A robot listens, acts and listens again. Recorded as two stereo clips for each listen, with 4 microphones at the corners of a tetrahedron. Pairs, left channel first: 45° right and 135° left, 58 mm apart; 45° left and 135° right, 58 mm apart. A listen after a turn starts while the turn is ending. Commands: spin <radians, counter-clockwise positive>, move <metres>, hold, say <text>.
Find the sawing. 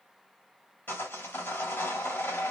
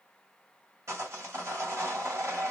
spin -1.66
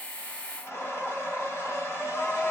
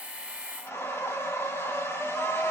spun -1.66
say Facing the sawing.